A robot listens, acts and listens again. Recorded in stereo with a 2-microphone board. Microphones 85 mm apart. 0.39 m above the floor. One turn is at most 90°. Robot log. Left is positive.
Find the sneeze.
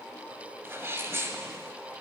note: The sneeze: about 30° right or 150° right.
cmd yaw -30
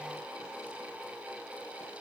cmd idle
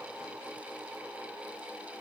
end: I heard a sneeze, but can't make it out now. It was about straight ahead or 120° right.